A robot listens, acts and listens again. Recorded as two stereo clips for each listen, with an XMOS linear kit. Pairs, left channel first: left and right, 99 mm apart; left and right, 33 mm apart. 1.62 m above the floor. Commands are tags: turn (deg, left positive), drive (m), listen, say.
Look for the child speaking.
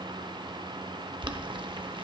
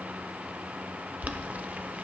<listen/>
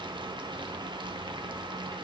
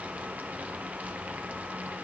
<listen/>
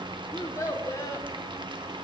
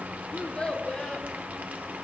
<turn deg="30"/>
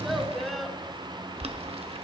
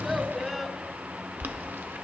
<say>Found it: a child speaking, straight ahead, 1 to 2 m away.</say>